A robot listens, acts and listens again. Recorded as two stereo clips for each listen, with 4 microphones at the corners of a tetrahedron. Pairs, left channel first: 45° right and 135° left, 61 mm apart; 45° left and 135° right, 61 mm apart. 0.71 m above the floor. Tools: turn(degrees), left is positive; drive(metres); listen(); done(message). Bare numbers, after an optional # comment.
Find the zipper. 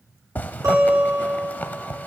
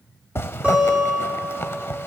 # The zipper: 10° left.
turn(10)
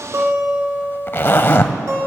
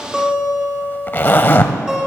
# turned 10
done("Found it: a zipper, straight ahead, under 1 m away.")